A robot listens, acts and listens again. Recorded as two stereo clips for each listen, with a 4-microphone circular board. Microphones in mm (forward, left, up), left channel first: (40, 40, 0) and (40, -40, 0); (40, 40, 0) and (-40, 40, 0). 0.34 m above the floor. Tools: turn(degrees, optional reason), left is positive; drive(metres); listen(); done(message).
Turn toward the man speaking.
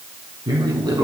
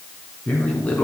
turn(degrees=-70, reason="The man speaking: 70° right.")
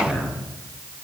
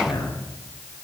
turn(degrees=15, reason="The man speaking is now 15° left.")
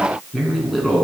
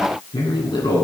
done("Facing the man speaking, over 4 m away.")